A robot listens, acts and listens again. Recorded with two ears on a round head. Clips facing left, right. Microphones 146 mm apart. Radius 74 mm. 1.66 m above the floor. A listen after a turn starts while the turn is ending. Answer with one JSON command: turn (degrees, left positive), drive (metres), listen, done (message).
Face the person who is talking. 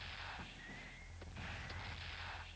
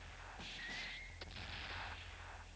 {"listen": true}
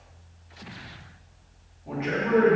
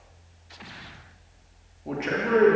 {"turn": -50}
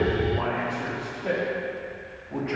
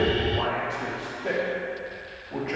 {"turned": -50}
{"done": "Facing the man speaking."}